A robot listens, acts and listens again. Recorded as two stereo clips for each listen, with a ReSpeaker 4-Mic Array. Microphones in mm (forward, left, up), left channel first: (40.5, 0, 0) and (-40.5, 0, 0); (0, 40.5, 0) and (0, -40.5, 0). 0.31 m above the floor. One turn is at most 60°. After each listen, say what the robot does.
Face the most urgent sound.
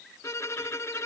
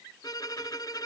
Keep listening.
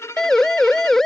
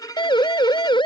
Turn 60° left.
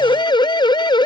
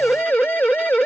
Turn 25° left.
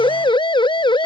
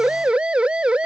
Turn 10° right.
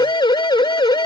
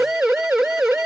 Found it: a siren, straight ahead.